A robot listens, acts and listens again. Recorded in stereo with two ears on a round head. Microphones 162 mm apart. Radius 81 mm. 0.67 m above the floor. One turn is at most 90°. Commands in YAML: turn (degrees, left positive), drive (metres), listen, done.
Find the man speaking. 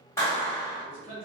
turn: -30
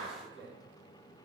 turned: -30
done: "Found it: a man speaking, straight ahead."